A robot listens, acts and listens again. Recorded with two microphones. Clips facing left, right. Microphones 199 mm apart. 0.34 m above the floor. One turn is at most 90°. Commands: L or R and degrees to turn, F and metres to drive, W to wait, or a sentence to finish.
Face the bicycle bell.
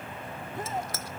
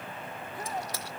R15
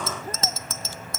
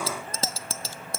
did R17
R90
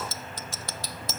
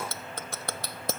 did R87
R60
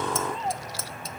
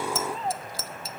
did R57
Found it: a bicycle bell, straight ahead.